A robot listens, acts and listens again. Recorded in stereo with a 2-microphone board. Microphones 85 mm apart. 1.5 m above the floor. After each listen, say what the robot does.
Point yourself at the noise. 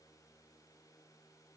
Keep listening.
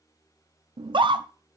Turn 60° right.
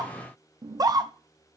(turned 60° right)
Turn 45° right.
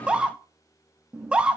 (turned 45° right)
Turn 10° right.
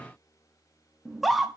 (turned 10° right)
Found it: a scream, straight ahead, under 1 m away.